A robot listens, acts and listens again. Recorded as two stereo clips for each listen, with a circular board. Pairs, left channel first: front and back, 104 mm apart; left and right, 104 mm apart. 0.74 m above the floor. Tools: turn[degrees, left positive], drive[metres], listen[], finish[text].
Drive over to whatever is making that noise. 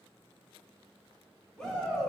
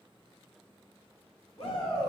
Thought: The shout: 80° left.
Action: turn[80]
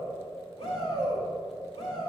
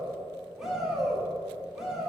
Action: drive[1.0]
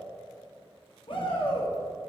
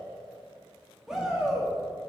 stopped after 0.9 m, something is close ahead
Action: finish[Arrived at the shout, straight ahead.]